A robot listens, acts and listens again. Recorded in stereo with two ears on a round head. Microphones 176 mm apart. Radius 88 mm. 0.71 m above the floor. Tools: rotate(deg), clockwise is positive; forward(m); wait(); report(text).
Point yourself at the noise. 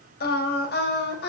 rotate(-60)
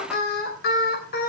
rotate(-45)
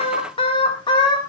rotate(-20)
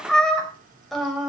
report("Found it: singing, straight ahead, 2 to 4 m away.")